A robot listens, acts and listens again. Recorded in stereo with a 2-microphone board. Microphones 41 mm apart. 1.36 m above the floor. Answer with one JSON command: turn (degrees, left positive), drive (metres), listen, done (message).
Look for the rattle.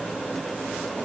{"listen": true}
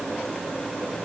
{"listen": true}
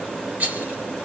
{"turn": -45}
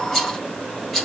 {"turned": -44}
{"done": "Found it: a rattle, straight ahead, over 4 m away."}